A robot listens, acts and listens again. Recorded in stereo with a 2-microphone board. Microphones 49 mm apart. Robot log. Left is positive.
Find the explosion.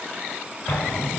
note: The explosion: about 70° left or 110° left.
cmd yaw +70
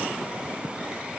cmd idle
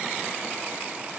end: I heard an explosion, but can't make it out now. It was about straight ahead or 40° left.